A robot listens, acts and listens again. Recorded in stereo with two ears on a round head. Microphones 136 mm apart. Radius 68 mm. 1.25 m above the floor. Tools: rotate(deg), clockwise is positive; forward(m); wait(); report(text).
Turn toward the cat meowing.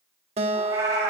rotate(20)
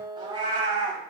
rotate(30)
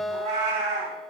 rotate(130)
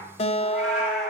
report("Found it: a cat meowing, straight ahead.")